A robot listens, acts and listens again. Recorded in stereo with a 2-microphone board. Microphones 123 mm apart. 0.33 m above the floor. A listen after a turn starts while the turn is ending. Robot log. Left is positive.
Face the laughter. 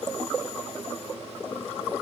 cmd idle
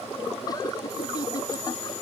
note: The laughter: about 30° left or 150° left.
cmd yaw +30
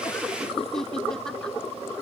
end: Found it: laughter, straight ahead.